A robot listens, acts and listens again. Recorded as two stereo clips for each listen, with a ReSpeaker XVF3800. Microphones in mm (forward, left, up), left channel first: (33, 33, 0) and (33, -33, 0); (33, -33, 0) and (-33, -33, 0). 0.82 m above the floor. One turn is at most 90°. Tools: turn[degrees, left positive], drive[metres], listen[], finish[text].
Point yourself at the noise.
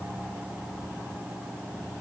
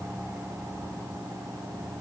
Action: listen[]
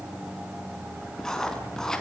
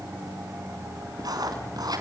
Thought: The writing: 170° left.
Action: turn[90]
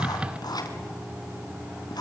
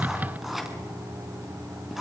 Thought: The writing is now 95° left.
Action: turn[90]
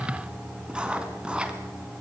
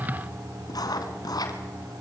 Thought: The writing is now 15° right.
Action: turn[-15]
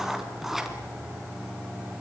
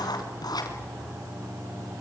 Action: finish[Facing the writing, 2 to 4 m away.]